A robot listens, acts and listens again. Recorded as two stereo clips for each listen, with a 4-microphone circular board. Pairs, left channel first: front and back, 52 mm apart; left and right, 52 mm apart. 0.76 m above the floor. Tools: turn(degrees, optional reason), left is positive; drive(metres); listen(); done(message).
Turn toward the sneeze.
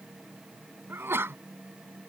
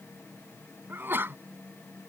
turn(degrees=-135, reason="The sneeze: 135° right.")
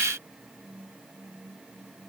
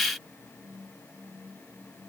done("I heard a sneeze from this way, but can't make it out now.")